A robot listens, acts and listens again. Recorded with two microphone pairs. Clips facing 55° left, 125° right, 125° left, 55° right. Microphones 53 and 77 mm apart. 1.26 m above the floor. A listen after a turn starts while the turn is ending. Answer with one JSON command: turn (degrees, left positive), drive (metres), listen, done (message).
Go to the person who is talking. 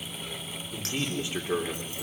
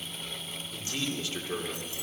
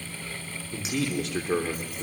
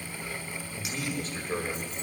{"turn": 125}
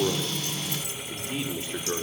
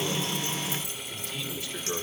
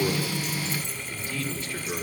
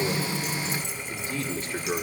{"drive": 1.0}
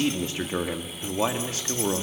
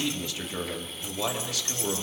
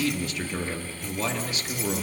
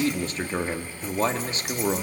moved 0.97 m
{"drive": 1.0}
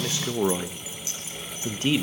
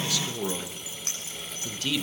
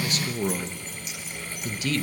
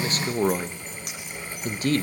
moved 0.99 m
{"drive": 1.0}
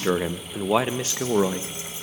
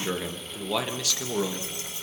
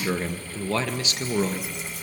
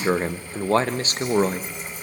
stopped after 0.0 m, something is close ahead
{"done": "I am next to the man speaking."}